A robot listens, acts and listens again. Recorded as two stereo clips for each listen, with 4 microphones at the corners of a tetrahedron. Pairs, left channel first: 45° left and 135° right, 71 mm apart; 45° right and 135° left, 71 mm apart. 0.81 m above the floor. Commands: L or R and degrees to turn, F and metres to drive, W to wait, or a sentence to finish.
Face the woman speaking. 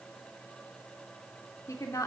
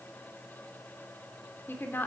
L10
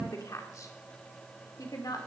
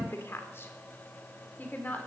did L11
L15
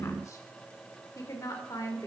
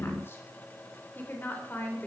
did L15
L15
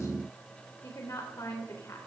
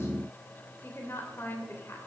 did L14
Found it: a woman speaking, straight ahead, 2 to 4 m away.